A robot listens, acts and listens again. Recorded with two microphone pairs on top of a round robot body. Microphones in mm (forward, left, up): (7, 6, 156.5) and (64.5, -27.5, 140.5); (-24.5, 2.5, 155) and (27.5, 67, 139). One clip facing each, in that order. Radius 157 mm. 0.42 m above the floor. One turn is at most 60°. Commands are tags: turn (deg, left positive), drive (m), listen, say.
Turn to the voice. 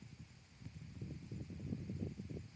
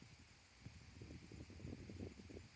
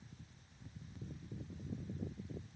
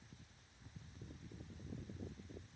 <listen/>
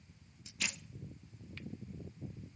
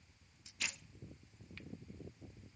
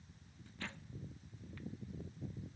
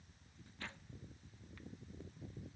<listen/>
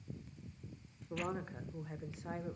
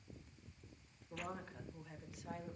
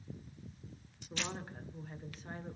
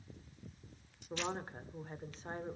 <turn deg="60"/>
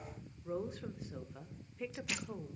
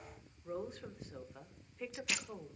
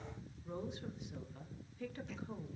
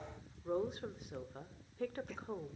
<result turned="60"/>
<turn deg="50"/>
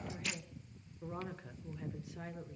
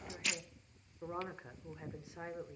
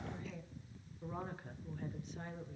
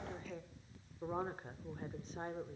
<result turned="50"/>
<turn deg="20"/>
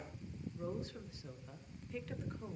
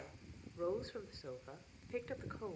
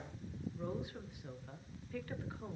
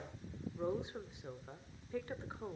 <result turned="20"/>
<say>Facing the woman speaking.</say>